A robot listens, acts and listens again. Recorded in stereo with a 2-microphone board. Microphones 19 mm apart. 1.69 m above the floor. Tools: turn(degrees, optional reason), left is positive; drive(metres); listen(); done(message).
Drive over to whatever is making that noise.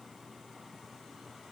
listen()
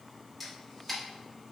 turn(degrees=30)
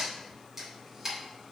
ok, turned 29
turn(degrees=-20, reason="So it is at 20° right.")
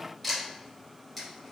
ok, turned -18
drive(metres=1.0)
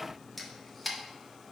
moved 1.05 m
drive(metres=1.0)
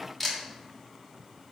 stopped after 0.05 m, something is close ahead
done("Arrived at the camera shutter, straight ahead.")